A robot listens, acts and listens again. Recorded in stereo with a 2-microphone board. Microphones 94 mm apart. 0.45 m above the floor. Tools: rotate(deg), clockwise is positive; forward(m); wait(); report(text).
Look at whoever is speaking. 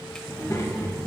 rotate(-40)
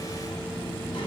rotate(-105)
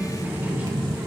rotate(20)
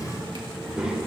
rotate(10)
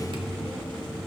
report("Facing the child speaking, over 4 m away.")